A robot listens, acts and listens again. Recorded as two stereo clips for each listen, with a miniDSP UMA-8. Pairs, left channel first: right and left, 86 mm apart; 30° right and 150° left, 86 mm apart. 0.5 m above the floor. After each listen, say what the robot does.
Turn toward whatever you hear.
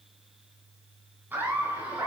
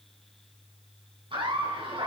Turn 160° left.
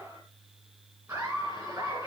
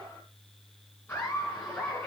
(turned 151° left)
Turn 35° left.
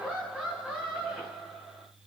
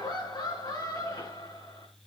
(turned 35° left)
Found it: laughter, straight ahead, over 4 m away.